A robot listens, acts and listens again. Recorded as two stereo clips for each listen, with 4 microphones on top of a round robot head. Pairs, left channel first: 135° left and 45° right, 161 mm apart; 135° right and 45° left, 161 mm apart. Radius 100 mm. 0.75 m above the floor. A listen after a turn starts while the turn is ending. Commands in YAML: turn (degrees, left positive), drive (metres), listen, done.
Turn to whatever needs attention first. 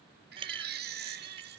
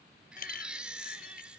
turn: -40
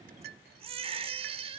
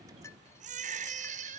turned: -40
done: "Found it: a baby crying, straight ahead."